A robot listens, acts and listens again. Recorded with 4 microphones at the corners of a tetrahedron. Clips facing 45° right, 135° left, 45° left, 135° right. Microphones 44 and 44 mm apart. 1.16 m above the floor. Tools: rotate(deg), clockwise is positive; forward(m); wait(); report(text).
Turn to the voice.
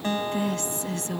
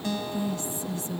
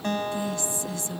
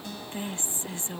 rotate(75)
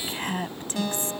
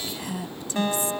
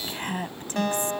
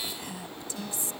report("Found it: a woman speaking, straight ahead.")